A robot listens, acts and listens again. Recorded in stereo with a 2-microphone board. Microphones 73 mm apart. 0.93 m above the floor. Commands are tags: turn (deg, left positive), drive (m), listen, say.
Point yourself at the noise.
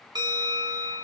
<turn deg="-70"/>
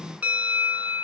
<turn deg="-20"/>
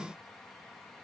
<listen/>
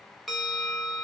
<say>Found it: a bell, straight ahead.</say>